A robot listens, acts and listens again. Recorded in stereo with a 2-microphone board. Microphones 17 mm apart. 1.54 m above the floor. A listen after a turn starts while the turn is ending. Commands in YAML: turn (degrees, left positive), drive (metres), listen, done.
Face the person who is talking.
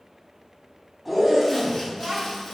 turn: -60
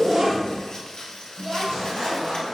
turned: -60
turn: -75
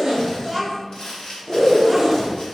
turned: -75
turn: -10
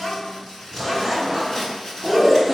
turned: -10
done: "Found it: a child speaking, straight ahead."